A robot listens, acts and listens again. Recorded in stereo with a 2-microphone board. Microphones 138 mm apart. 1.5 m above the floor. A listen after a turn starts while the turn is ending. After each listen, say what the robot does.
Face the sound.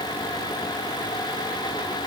Keep listening.
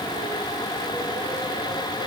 Keep listening.
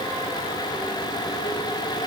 I can't make out anything.